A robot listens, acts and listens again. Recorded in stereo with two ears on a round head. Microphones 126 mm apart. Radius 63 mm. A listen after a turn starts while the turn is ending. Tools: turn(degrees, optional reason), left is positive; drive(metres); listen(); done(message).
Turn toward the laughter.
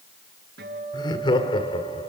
turn(degrees=40, reason="The laughter: about 40° left or 140° left.")
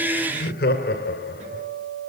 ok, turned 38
turn(degrees=100, reason="So it is at 100° left.")
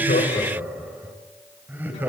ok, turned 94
turn(degrees=-15, reason="The laughter is now 15° right.")
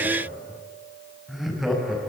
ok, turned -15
done("Facing the laughter, over 4 m away.")